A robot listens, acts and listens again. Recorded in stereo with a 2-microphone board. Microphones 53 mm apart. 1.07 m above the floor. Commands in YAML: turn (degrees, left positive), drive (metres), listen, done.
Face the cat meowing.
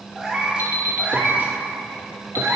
turn: -70
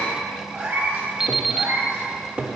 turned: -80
turn: -40
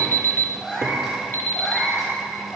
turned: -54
done: "Found it: a cat meowing, straight ahead."